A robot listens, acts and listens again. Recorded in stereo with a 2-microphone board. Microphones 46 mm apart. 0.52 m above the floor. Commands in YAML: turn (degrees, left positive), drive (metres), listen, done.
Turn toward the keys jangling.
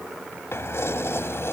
turn: 70
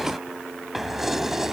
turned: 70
turn: -10
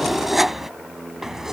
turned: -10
turn: -10
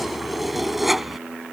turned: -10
done: "Facing the keys jangling."